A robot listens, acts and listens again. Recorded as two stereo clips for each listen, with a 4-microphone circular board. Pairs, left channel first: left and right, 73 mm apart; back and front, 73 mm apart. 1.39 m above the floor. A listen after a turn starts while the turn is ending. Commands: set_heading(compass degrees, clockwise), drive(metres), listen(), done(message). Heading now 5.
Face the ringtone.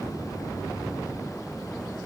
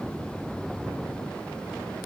listen()
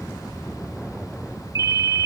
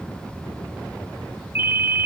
set_heading(60)
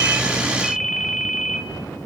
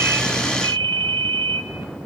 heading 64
done("Facing the ringtone, 1 to 2 m away.")